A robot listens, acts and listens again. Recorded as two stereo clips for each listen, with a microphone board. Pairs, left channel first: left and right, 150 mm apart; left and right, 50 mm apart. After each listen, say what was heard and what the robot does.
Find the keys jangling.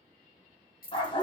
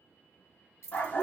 The keys jangling: about 70° left or 110° left. Turn 70° left.
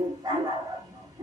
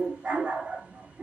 Keep listening.
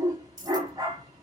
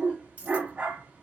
So it is at 25° right. Turn 25° right.
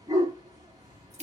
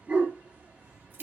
Keep listening.
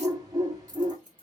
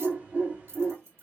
The keys jangling is now 55° right. Turn 55° right.
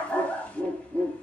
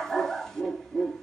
Keep listening.
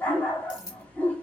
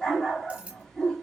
The keys jangling is now 25° right. Turn 25° right.
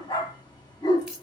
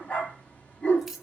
Facing the keys jangling.